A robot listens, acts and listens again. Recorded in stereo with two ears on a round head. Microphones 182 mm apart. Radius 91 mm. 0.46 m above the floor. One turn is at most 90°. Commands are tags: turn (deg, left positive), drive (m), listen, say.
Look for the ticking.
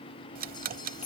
<turn deg="-45"/>
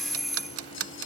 <turn deg="-90"/>
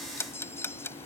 <turn deg="10"/>
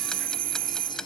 <say>Found it: ticking, straight ahead.</say>